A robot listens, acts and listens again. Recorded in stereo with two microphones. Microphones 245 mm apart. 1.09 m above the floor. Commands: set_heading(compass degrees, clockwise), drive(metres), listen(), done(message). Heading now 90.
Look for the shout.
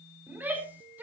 set_heading(120)
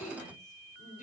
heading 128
set_heading(98)
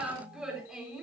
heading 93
done("Facing the shout, over 4 m away.")